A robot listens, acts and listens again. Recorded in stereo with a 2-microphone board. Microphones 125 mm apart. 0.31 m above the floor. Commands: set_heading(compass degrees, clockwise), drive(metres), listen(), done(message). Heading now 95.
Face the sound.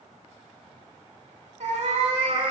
set_heading(140)
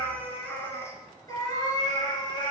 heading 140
set_heading(100)
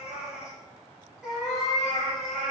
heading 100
done("Found it: a cat meowing, straight ahead, 2 to 4 m away.")